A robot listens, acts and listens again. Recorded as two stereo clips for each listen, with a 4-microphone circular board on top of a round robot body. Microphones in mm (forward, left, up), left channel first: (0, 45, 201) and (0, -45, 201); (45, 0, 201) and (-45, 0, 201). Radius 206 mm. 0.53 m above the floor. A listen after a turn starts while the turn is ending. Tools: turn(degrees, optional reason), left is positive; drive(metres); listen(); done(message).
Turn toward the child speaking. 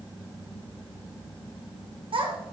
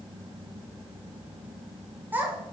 turn(degrees=-105, reason="The child speaking: 105° right.")
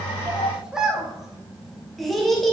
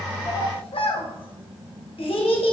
done("Found it: a child speaking, straight ahead.")